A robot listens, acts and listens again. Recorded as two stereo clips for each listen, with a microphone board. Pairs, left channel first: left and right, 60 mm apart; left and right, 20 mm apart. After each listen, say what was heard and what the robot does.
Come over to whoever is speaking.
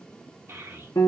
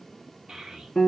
The child speaking: about 45° right or 135° right. Turn 45° right.
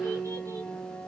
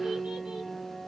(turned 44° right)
Keep listening.
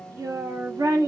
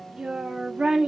So it is at 85° right. Turn 85° right.
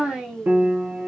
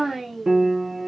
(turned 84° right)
Drive 1.0 m forward.
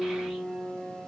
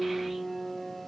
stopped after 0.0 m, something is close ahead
Keep listening.
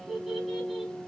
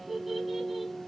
Something is in my way. I am facing the child speaking but have not reached it.